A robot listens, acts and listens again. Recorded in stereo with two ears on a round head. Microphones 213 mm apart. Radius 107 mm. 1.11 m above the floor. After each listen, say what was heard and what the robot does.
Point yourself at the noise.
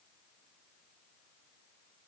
Keep listening.
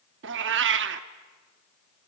The cat meowing: about 55° right or 125° right. Turn 55° right.
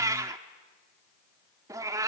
So it is at 15° right. Turn 15° right.
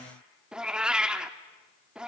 Found it: a cat meowing, straight ahead, under 1 m away.